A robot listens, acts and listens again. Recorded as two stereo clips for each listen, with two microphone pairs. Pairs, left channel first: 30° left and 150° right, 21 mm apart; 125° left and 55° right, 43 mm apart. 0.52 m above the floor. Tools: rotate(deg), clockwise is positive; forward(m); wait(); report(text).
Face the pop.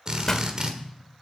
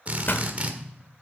rotate(-95)
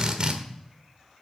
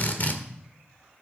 report("Facing where the pop came from. I can't hear it now.")